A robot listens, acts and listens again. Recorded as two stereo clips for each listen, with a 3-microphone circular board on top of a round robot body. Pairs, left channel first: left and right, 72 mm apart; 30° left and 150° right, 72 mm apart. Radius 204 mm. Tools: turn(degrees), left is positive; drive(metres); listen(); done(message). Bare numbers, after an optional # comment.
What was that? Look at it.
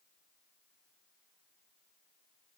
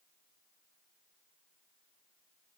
listen()
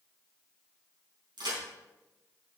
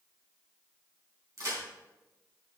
# The crack: 105° right.
turn(-105)
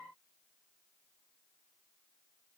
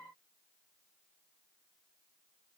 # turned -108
done("Facing where the crack came from. I can't hear it now.")